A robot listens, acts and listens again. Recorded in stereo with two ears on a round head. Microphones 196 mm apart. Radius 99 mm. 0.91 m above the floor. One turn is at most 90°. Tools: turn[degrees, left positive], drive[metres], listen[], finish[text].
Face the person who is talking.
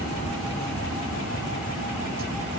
Action: listen[]
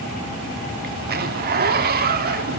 Action: listen[]
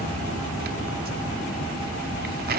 Action: finish[I can't make out anyone speaking, only a zipper.]